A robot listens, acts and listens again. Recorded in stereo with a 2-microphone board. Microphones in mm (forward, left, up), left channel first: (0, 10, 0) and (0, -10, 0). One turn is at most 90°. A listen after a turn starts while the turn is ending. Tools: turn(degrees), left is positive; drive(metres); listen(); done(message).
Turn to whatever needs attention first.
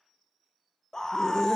turn(degrees=30)
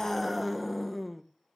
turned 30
done("Found it: a scream, straight ahead, 1 to 2 m away.")